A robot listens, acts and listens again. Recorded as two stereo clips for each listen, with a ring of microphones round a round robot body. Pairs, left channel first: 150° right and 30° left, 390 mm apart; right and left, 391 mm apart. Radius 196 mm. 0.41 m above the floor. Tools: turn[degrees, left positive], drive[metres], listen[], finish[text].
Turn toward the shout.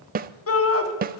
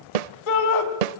Thought: The shout: 95° right.
Action: turn[-95]
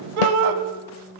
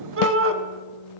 Thought: The shout is now 30° left.
Action: turn[30]
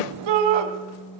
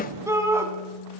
Action: finish[Facing the shout.]